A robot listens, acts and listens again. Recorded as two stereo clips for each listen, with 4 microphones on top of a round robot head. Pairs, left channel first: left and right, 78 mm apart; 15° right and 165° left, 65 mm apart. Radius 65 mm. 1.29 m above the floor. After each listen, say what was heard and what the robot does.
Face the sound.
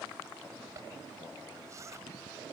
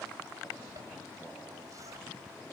The zipper: 140° right. Turn 140° right.
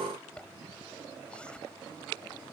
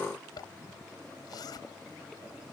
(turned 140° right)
The zipper is now 10° left. Turn 10° left.
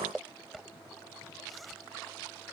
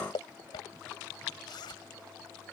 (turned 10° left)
Found it: a zipper, straight ahead.